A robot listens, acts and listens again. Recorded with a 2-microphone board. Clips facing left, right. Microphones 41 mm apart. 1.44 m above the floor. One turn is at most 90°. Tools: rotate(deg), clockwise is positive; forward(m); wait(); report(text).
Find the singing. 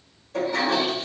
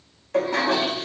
wait()
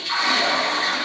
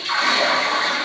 wait()
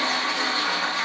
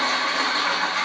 report("I can't make out singing to turn to.")